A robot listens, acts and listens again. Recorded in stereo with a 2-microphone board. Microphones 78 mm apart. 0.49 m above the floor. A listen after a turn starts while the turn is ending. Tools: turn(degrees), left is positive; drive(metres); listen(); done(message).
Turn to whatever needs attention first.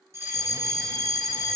turn(degrees=-35)
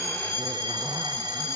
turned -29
turn(degrees=-115)
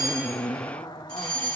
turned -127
turn(degrees=15)
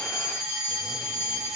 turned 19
done("Facing the fire alarm, over 4 m away.")